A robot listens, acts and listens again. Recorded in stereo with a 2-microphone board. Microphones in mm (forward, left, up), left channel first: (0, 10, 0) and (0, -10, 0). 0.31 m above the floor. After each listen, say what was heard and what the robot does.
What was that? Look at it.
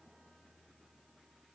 Keep listening.
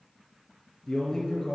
The man speaking: about 15° left or 165° left. Turn 15° left.
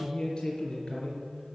The man speaking: about 35° left or 145° left. Turn 35° left.
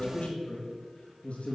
So it is at 105° left. Turn 105° left.
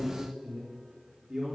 The man speaking is now 15° right. Turn 15° right.
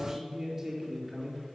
Facing the man speaking.